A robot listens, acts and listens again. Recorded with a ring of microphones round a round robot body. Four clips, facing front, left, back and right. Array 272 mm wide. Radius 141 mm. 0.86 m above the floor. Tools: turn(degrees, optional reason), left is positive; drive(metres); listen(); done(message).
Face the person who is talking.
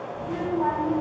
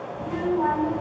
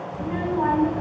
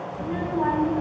turn(degrees=-170, reason="The child speaking: 170° right.")
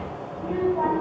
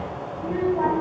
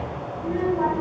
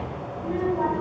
turn(degrees=40, reason="The child speaking is now 40° left.")
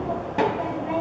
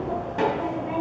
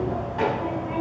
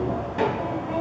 done("Found it: a child speaking, straight ahead.")